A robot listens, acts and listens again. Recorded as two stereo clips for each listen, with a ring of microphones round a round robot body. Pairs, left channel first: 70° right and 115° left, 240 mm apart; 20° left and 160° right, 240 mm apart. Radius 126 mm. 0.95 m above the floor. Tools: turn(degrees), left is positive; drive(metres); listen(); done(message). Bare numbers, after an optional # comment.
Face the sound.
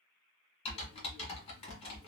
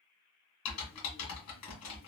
done("Facing the typing on a keyboard.")